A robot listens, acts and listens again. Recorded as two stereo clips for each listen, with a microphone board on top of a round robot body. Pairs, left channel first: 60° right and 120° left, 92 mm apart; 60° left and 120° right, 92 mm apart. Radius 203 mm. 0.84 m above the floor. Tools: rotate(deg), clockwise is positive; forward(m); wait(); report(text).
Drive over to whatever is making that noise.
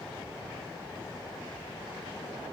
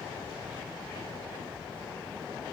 wait()
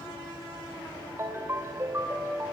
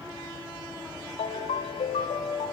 rotate(-60)
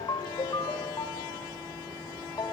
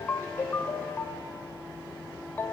rotate(10)
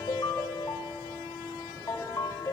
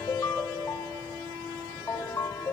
forward(1.0)
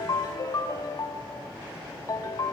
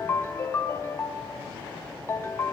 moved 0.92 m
forward(1.0)
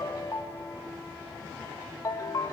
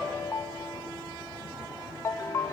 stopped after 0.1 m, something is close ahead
report("I am next to the ringtone.")